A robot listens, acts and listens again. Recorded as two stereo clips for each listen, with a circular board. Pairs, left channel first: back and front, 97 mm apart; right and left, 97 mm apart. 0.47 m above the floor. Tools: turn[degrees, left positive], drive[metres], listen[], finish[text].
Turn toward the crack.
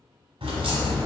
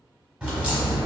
Thought: The crack: 10° left.
Action: turn[10]
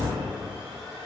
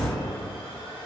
Action: finish[Found it: a crack, straight ahead, 1 to 2 m away.]